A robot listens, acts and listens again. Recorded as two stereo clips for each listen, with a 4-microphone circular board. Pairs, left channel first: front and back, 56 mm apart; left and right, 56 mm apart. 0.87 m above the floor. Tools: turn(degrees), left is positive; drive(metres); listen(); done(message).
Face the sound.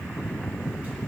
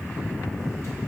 listen()
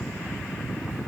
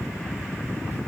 listen()
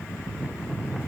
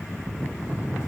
done("I can't make out anything to turn to.")